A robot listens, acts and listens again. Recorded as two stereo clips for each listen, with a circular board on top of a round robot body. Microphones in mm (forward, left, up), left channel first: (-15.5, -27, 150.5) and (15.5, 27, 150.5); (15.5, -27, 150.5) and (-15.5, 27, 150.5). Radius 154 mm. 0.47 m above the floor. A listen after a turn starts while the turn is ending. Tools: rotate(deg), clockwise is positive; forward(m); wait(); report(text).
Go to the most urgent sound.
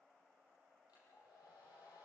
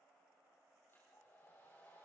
wait()
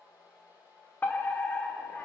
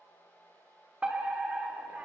rotate(175)
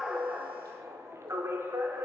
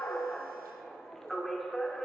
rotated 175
rotate(-25)
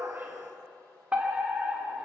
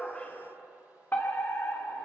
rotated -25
forward(1.0)
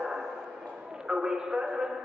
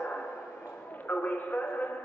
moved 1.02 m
rotate(15)
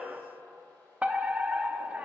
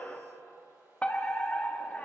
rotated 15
forward(1.0)
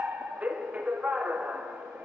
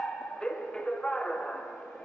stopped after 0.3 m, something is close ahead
report("Arrived at the fire alarm, straight ahead.")